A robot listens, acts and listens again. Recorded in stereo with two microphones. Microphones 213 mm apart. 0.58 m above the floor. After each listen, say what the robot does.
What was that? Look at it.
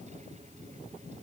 Keep listening.
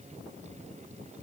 Keep listening.
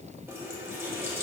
Turn 30° right.
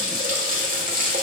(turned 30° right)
Turn 140° right.
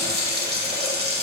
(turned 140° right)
Turn 50° right.
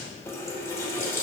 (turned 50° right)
Turn 15° left.
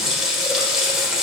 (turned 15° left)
Found it: a running tap, straight ahead.